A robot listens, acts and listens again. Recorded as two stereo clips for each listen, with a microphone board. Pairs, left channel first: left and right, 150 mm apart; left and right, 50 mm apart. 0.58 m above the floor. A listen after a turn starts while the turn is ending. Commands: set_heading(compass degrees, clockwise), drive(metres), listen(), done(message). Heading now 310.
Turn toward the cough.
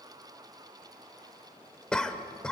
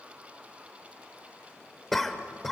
set_heading(280)
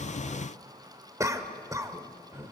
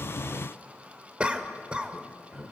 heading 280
set_heading(305)
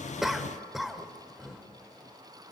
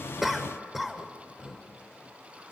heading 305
done("Found it: a cough, straight ahead, 1 to 2 m away.")